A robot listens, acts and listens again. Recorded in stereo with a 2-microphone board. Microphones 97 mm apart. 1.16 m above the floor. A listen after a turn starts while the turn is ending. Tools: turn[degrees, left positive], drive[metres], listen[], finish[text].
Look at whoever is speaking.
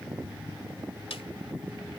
Action: listen[]
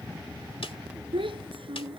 Thought: The child speaking: about 60° right or 120° right.
Action: turn[-60]
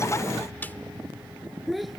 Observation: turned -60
Action: finish[Found it: a child speaking, straight ahead.]